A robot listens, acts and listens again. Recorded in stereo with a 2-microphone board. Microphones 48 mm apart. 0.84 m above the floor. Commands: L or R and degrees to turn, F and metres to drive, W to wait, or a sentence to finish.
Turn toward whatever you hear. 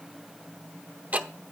R30
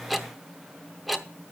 Facing the ticking.